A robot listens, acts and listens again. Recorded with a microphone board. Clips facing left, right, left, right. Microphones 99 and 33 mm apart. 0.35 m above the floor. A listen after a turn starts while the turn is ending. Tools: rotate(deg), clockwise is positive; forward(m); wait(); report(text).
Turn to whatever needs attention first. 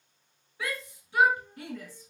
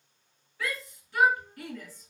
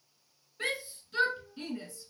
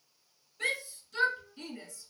rotate(-20)
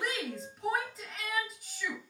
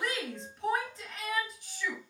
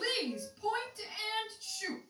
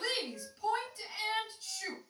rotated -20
report("Found it: a shout, straight ahead.")